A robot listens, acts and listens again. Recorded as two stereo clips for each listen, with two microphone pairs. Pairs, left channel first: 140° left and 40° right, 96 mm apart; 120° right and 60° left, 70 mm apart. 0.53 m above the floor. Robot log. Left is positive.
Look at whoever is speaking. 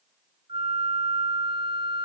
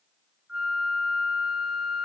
cmd idle
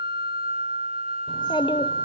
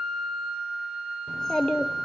note: The child speaking: 160° left.
cmd yaw +160
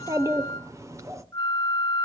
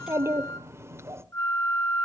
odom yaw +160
note: The child speaking is now 10° left.
cmd yaw +10
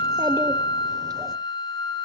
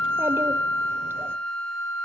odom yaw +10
cmd idle
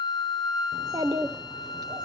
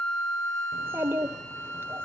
end: Facing the child speaking.